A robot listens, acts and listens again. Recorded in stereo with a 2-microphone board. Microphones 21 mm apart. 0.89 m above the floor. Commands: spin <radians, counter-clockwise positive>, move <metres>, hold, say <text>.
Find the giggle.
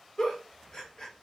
spin 0.61
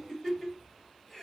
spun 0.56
spin 0.17
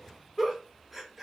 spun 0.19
say Facing the giggle.